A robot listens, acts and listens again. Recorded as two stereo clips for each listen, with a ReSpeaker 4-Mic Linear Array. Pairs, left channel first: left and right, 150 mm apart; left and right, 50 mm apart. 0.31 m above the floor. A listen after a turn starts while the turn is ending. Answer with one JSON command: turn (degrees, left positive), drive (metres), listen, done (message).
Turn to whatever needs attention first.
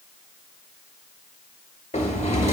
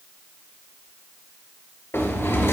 {"listen": true}
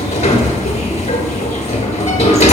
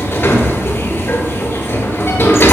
{"listen": true}
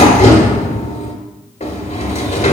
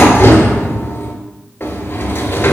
{"done": "I can't make out anything urgent, only a sliding door."}